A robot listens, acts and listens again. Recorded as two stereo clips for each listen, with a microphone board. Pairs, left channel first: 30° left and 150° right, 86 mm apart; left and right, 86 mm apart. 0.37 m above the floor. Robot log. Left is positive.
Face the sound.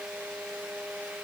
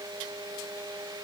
cmd idle
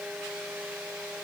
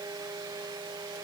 cmd idle
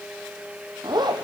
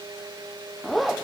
note: The zipper: straight behind.
cmd yaw +180
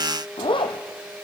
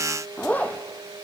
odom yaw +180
note: The zipper is now 20° left.
cmd yaw +20
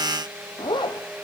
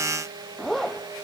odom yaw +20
end: Facing the zipper.